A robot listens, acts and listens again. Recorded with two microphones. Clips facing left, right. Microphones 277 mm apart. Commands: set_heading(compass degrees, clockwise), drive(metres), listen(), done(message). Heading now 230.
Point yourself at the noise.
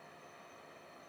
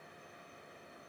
listen()
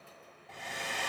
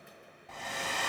set_heading(320)
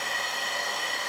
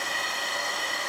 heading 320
done("Facing the hair dryer.")